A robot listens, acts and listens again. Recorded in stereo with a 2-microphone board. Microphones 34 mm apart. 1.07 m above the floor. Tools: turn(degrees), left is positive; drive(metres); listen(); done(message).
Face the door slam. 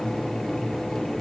listen()
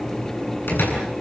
turn(degrees=90)
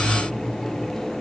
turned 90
done("Facing where the door slam came from. I can't hear it now.")